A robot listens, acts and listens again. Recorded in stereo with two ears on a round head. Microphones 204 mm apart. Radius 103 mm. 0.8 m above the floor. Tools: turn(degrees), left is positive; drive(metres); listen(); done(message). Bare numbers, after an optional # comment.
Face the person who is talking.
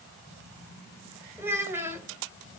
turn(-30)
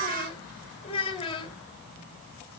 # So it is at 25° left.
turn(25)
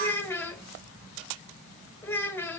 # The child speaking is now 10° left.
turn(10)
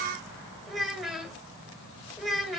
done("Facing the child speaking, 1 to 2 m away.")